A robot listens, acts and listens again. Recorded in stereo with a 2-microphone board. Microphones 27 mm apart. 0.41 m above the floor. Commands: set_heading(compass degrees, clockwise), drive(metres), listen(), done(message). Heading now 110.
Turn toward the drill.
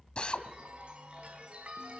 set_heading(70)
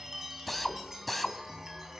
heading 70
done("Facing the drill.")